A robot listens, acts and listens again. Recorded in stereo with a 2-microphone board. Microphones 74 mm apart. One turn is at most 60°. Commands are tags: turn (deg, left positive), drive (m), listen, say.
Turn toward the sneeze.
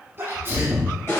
<turn deg="-30"/>
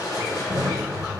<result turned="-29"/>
<listen/>
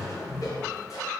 <say>I heard a sneeze, but can't make it out now. It was about straight ahead or 120° right.</say>